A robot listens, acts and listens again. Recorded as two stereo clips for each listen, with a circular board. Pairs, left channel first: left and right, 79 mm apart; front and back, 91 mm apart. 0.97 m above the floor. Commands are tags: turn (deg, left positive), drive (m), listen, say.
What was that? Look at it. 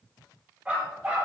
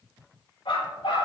<turn deg="-15"/>
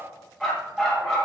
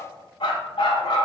<say>Found it: a dog barking, straight ahead, 2 to 4 m away.</say>